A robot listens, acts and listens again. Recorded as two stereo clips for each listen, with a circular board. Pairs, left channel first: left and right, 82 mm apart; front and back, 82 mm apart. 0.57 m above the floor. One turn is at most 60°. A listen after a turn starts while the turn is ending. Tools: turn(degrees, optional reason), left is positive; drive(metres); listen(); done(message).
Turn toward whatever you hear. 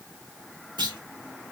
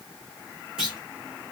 turn(degrees=-60, reason="The clunk: 100° right.")
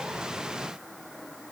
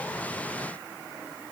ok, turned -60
turn(degrees=-40, reason="Nothing new. It was at 40° right.")
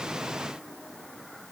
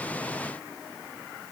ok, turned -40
done("I heard a clunk from this way, but can't make it out now.")